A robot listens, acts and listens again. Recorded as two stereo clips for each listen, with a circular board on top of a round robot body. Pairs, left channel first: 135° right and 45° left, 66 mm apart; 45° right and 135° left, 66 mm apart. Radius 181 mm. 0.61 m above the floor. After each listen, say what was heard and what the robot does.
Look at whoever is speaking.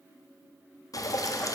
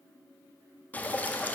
Keep listening.
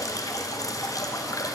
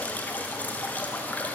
Keep listening.
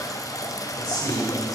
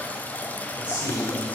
The man speaking: 155° right. Turn 155° right.
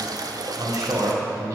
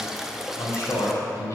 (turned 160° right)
Found it: a man speaking, straight ahead.